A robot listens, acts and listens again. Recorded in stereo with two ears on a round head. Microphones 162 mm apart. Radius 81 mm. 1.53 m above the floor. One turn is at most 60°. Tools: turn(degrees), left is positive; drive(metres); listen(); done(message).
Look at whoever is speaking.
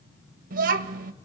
turn(degrees=-50)
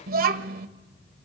turn(degrees=-60)
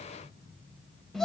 done("Found it: a child speaking, straight ahead.")